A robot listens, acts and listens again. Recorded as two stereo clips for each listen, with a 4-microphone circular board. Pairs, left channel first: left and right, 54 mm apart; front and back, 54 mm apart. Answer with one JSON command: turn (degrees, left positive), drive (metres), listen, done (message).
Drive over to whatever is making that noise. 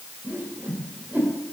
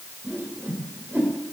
{"turn": -140}
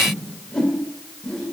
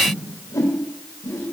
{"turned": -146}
{"turn": 10}
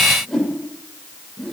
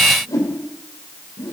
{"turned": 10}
{"drive": 1.0}
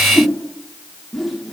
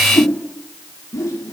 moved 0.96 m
{"drive": 1.0}
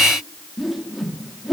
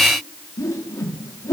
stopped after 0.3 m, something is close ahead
{"done": "I am next to the whoosh."}